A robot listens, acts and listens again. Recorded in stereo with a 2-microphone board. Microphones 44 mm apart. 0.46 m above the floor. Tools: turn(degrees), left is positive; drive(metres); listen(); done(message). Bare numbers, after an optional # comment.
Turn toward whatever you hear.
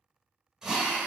turn(-30)
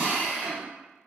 # So it is at 135° right.
turn(-135)
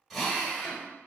done("Found it: a drill, straight ahead, 1 to 2 m away.")